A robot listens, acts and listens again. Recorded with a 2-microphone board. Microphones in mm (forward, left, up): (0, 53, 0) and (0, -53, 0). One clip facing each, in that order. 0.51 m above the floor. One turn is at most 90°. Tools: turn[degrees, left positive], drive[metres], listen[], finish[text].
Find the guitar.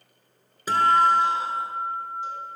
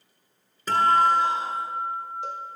Action: turn[30]
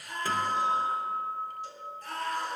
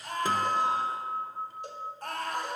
Thought: So it is at 20° right.
Action: turn[-20]
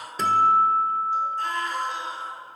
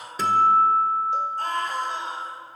Action: finish[Facing the guitar.]